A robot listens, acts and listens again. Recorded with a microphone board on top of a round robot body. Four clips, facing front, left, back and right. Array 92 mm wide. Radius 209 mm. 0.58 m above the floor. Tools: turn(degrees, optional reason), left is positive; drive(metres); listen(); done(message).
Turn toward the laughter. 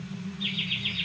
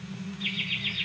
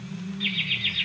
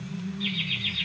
turn(degrees=165, reason="The laughter: 165° left.")
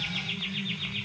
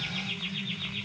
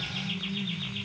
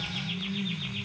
turn(degrees=15, reason="The laughter is now 15° left.")
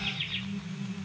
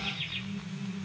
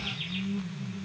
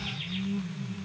listen()
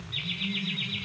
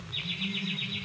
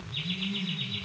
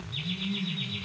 done("Facing the laughter, 2 to 4 m away.")